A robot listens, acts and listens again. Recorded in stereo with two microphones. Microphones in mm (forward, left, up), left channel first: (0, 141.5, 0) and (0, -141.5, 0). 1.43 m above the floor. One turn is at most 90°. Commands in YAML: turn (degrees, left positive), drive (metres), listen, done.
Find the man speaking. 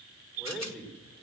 turn: 30
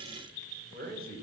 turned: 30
turn: -35
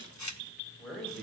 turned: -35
done: "Found it: a man speaking, straight ahead."